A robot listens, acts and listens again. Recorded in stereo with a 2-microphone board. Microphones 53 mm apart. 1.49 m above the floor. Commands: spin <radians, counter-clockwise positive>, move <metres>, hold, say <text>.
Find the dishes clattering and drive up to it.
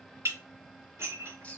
spin -0.87
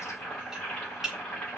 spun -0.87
move 1.0
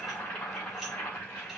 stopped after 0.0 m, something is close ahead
hold
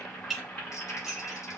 say Something is in my way. I am facing the dishes clattering but have not reached it.